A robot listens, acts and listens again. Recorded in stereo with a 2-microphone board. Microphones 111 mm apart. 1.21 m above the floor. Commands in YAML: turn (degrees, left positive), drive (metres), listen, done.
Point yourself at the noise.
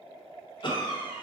turn: 45
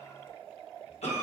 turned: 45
turn: 90
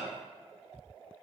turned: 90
done: "Found it: a cough, straight ahead."